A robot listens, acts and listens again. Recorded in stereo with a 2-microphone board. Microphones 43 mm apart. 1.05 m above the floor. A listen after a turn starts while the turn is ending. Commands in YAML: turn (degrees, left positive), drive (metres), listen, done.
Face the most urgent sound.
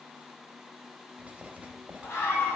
turn: 90
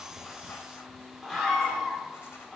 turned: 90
done: "Found it: a scream, straight ahead, 2 to 4 m away."